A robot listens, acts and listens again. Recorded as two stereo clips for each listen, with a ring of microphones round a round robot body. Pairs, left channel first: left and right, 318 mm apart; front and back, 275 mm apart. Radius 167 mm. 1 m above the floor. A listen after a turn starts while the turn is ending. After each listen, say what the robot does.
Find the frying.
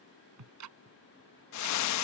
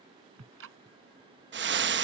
Turn 130° left.
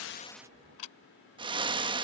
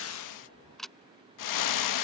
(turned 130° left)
Turn 15° right.
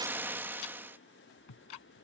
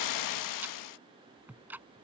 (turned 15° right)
Found it: frying, straight ahead.